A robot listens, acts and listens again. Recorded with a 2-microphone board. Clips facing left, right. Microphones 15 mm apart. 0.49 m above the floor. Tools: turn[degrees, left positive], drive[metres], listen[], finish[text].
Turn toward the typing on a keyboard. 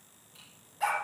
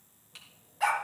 Thought: The typing on a keyboard: about 50° right or 130° right.
Action: turn[-50]
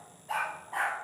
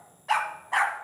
Action: listen[]
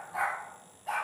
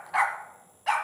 Action: listen[]
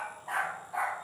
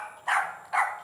Action: finish[I heard typing on a keyboard, but can't make it out now. It was about straight ahead or 80° right.]